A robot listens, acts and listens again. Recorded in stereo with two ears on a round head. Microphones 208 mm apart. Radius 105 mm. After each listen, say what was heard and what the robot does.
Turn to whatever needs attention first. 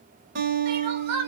Turn 90° right.
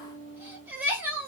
So it is at 10° right. Turn 10° right.
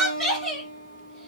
Found it: crying, straight ahead, 1 to 2 m away.